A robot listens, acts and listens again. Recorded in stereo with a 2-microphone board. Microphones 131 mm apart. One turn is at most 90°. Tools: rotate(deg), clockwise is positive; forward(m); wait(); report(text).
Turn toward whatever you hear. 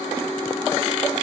wait()
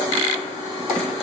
wait()
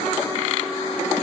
report("I can't make out anything to turn to.")